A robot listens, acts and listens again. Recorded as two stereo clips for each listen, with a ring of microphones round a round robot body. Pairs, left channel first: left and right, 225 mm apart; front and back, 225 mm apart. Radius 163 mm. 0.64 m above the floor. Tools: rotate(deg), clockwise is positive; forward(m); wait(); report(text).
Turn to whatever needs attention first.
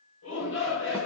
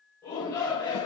rotate(-80)
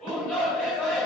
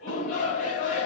report("Facing the shout, 2 to 4 m away.")